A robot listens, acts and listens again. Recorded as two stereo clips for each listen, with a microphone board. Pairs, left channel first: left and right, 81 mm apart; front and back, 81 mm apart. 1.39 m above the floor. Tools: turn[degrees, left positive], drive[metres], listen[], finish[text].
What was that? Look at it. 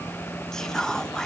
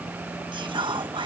Thought: The whispering: 175° left.
Action: turn[175]
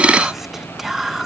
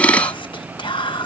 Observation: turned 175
Action: finish[Facing the whispering.]